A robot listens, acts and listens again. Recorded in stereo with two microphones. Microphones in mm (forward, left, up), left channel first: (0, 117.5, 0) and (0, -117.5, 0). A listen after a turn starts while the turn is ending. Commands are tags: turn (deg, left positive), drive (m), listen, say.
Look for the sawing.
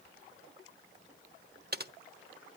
<listen/>
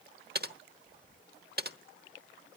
<listen/>
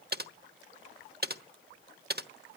<say>I can't make out sawing, only typing on a keyboard.</say>